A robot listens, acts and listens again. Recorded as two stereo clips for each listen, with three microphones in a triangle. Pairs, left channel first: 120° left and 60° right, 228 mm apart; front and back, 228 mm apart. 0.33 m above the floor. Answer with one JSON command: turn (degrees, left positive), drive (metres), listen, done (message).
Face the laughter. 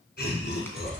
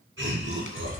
{"turn": 160}
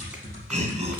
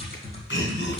{"turn": -10}
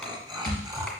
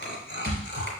{"done": "Found it: laughter, straight ahead."}